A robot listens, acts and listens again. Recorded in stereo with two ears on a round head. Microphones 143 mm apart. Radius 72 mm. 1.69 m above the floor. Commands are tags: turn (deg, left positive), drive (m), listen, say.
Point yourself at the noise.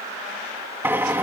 <turn deg="-30"/>
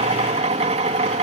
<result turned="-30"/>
<turn deg="-135"/>
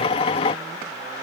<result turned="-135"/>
<turn deg="35"/>
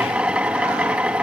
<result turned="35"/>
<say>Facing the drill.</say>